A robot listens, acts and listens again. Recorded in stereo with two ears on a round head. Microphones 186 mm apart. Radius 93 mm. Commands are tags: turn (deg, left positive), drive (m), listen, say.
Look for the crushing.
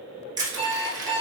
<turn deg="-20"/>
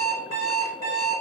<listen/>
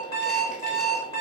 <listen/>
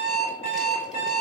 <say>I heard crushing, but can't make it out now. It was about straight ahead or 140° right.</say>